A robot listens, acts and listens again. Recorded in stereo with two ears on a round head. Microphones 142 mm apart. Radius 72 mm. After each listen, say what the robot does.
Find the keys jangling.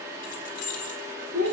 Turn 50° left.
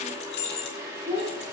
Turn 70° left.
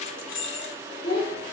Turn 45° left.
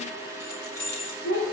Turn 15° left.
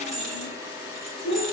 Facing the keys jangling, 2 to 4 m away.